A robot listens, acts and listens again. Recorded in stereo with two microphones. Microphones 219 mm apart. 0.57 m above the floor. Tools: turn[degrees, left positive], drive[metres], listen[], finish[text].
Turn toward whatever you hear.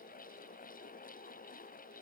Action: listen[]
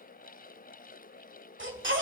Thought: The baby crying: about 60° right or 120° right.
Action: turn[-60]
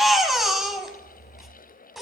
Action: finish[Found it: a baby crying, straight ahead.]